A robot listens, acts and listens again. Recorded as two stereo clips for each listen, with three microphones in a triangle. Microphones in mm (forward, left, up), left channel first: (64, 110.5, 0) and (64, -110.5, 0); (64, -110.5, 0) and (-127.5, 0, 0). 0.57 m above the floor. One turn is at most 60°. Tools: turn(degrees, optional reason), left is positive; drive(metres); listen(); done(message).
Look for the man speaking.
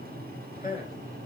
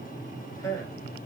turn(degrees=40, reason="The man speaking: 40° left.")
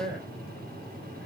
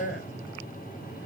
done("Found it: a man speaking, straight ahead, 2 to 4 m away.")